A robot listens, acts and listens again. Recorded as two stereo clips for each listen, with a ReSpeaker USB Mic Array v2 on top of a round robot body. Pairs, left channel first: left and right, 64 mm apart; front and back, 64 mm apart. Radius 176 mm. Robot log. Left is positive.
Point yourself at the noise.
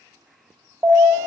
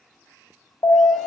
note: The alarm: 25° right.
cmd yaw -25
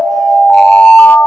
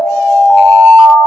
end: Found it: an alarm, straight ahead.